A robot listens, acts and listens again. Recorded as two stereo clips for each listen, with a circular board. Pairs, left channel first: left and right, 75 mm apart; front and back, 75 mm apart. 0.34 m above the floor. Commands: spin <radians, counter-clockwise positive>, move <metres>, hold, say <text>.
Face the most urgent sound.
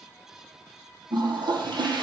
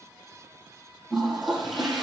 hold
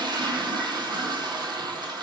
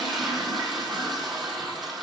hold
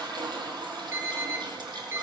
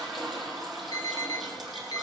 spin -0.61
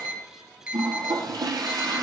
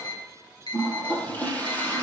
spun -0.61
spin -0.26
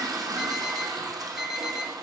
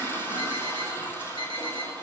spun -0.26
say Facing the alarm, over 4 m away.